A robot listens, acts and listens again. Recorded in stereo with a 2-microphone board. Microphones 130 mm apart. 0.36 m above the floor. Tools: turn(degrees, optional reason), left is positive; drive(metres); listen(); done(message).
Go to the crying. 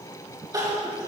turn(degrees=-30, reason="The crying: about 30° right or 150° right.")
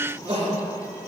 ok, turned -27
turn(degrees=-120, reason="So it is at 120° right.")
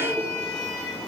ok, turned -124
listen()
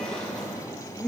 drive(metres=1.0)
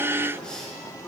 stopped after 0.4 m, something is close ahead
listen()
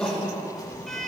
done("Blocked. The crying is further on, straight ahead.")